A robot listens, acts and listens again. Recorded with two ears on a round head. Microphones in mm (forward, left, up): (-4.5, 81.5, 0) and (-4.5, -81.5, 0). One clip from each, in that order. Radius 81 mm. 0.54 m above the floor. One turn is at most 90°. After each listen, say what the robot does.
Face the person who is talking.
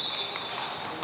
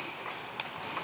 Keep listening.
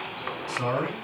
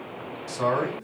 Turn 25° right.
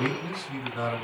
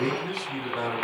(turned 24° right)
Facing the man speaking, 2 to 4 m away.